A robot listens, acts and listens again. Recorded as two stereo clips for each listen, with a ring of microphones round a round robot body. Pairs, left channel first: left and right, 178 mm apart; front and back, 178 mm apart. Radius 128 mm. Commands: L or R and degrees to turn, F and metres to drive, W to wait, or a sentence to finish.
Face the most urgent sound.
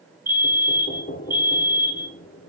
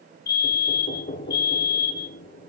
R15
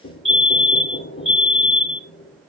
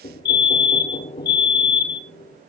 Found it: a fire alarm, straight ahead, 2 to 4 m away.